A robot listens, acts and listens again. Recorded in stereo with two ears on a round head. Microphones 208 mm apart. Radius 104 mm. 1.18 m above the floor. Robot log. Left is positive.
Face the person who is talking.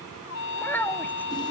cmd yaw +30
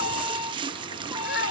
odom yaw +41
note: So it is at 130° left.
cmd yaw +130
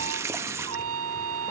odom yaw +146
note: Nothing new. It was at 15° right.
cmd yaw -15
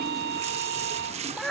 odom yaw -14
end: Facing the child speaking.